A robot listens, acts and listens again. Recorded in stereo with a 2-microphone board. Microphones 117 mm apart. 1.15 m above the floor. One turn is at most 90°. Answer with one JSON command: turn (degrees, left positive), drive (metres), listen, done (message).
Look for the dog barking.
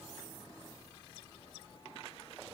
{"listen": true}
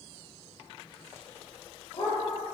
{"turn": 45}
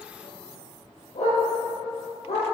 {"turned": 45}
{"turn": 80}
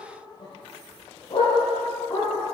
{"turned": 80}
{"turn": 45}
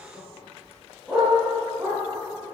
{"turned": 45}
{"done": "Found it: a dog barking, straight ahead."}